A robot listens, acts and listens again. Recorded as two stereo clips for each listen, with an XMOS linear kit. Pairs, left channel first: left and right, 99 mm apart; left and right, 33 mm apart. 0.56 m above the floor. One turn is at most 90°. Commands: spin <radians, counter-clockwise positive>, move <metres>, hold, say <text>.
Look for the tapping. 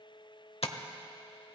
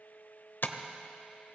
spin 1.57
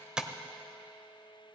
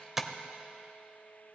spin -0.17
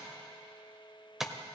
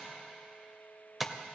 say Found it: tapping, straight ahead, under 1 m away.